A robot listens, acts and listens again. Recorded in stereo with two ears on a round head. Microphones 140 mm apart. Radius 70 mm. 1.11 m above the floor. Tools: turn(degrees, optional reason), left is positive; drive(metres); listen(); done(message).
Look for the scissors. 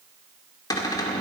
listen()
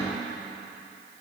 listen()
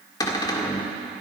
done("I can't make out scissors to turn to.")